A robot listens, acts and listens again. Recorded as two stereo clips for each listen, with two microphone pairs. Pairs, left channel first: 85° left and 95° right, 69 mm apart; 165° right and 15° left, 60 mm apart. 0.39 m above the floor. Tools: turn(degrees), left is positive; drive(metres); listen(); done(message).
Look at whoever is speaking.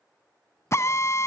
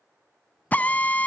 listen()
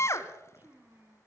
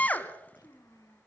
turn(degrees=-150)
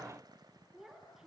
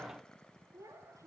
turn(degrees=-10)
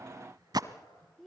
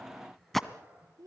done("Found it: a child speaking, straight ahead.")